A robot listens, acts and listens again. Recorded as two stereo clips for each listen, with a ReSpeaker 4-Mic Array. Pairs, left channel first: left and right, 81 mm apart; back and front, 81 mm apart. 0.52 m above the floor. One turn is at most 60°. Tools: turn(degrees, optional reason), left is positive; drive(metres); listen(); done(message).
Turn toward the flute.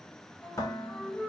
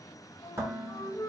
turn(degrees=60, reason="The flute: 150° left.")
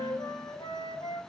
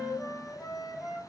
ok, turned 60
turn(degrees=60, reason="The flute is now 90° left.")
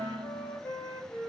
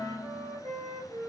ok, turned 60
turn(degrees=25, reason="The flute is now 25° left.")
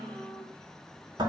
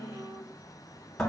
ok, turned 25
listen()
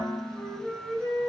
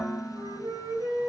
done("Facing the flute, 2 to 4 m away.")